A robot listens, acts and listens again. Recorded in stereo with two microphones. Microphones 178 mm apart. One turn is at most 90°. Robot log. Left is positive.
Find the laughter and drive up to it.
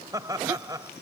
note: The laughter: about 20° right or 160° right.
cmd yaw -20
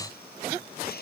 note: So it is at 140° right.
cmd yaw -90
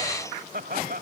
note: The laughter is now 90° right.
cmd yaw -90
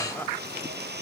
cmd idle
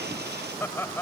note: The laughter is now 15° left.
cmd yaw +15
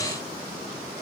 cmd idle
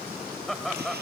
cmd fwd 1.0
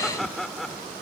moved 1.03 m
cmd fwd 1.0
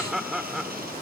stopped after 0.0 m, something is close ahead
end: Arrived at the laughter, straight ahead.